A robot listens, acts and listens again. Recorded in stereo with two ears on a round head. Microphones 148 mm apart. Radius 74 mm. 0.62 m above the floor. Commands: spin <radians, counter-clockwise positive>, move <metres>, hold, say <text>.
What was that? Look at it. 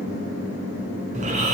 spin -0.79
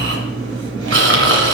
spin -1.57
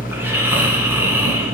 spin -0.26
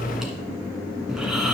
say Found it: snoring, straight ahead.